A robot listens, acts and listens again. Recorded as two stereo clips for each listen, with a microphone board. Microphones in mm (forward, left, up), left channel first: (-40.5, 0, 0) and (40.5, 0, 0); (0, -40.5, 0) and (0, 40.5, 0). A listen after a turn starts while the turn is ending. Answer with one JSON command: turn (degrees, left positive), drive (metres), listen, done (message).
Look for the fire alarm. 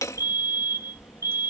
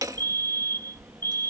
{"turn": -145}
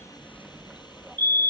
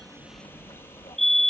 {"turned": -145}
{"done": "Found it: a fire alarm, straight ahead."}